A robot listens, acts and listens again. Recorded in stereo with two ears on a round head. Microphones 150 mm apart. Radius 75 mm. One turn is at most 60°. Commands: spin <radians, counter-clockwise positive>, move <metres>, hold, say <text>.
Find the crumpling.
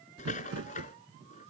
spin -1.05
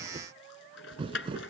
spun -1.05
spin -0.52
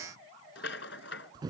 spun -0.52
spin -0.44
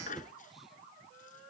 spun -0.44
hold
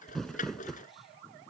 say Found it: crumpling, straight ahead.